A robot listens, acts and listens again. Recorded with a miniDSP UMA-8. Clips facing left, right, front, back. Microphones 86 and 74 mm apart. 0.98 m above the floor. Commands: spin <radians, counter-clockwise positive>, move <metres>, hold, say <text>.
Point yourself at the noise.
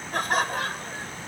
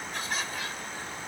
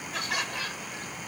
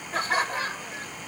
spin 2.18
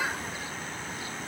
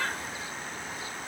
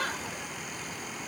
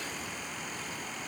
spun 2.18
spin 0.17
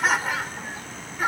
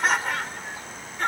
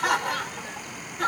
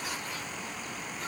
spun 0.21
say Found it: laughter, straight ahead.